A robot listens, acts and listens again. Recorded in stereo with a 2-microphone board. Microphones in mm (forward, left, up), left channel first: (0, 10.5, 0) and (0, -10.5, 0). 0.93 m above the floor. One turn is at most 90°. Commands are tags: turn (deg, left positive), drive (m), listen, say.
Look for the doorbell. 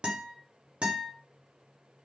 <listen/>
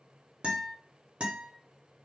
<listen/>
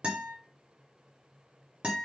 <say>I can't make out a doorbell, only a guitar.</say>